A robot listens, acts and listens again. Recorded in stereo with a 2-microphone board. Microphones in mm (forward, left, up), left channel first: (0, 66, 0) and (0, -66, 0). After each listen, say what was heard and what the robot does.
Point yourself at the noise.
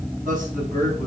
Turn 90° right.
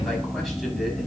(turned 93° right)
Keep listening.
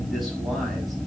Keep listening.
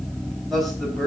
Found it: a man speaking, straight ahead.